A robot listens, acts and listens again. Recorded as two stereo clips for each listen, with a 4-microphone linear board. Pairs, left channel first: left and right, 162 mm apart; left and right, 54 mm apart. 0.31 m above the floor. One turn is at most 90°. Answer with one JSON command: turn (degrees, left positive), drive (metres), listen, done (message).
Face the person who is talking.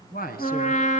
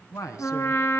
{"turn": 70}
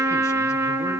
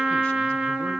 {"listen": true}
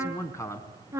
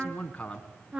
{"turn": 20}
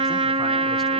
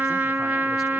{"listen": true}
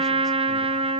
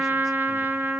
{"listen": true}
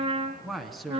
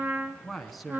{"done": "Facing the man speaking, 2 to 4 m away."}